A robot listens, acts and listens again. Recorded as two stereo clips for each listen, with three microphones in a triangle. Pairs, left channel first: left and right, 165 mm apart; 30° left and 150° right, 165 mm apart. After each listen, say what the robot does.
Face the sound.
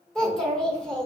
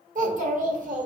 Turn 175° left.
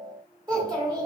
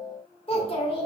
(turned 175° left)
Turn 25° right.
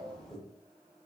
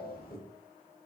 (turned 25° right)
Facing the child speaking.